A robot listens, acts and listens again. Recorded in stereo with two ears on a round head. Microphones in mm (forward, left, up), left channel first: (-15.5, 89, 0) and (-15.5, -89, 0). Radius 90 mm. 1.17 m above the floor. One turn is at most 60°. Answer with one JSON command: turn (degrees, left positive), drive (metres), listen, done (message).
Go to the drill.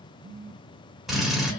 {"turn": 30}
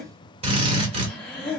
{"turn": -30}
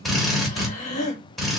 {"drive": 1.0}
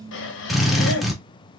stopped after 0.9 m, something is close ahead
{"done": "Arrived at the drill, straight ahead."}